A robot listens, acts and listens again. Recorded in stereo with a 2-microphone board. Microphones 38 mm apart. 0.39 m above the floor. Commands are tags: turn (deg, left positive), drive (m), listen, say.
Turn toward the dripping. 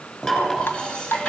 <turn deg="70"/>
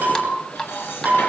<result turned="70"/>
<turn deg="20"/>
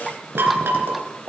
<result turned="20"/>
<listen/>
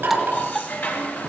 <say>Found it: dripping, straight ahead.</say>